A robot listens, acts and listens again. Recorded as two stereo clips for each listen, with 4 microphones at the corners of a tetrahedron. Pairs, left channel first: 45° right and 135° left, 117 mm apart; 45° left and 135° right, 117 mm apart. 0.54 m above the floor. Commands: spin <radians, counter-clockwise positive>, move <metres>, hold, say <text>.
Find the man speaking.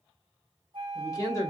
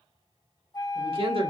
spin -1.75
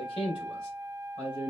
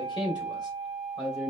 spin -0.17
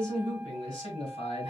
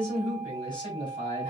say Found it: a man speaking, straight ahead.